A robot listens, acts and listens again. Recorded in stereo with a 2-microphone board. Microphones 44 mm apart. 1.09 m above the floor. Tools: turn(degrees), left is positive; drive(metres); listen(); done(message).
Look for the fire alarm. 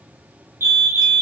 turn(degrees=-65)
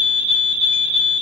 turn(degrees=-10)
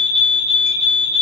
done("Facing the fire alarm, 2 to 4 m away.")